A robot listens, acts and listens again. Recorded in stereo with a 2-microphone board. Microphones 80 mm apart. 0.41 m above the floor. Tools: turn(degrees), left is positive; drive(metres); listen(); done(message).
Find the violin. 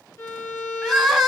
turn(degrees=35)
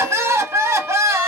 listen()
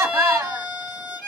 done("Found it: a violin, straight ahead, 2 to 4 m away.")